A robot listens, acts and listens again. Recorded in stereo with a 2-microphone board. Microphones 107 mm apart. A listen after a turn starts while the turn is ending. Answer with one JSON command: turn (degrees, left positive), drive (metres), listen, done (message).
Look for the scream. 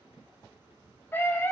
{"turn": 20}
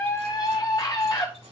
{"turn": 135}
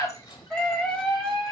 {"done": "Found it: a scream, straight ahead."}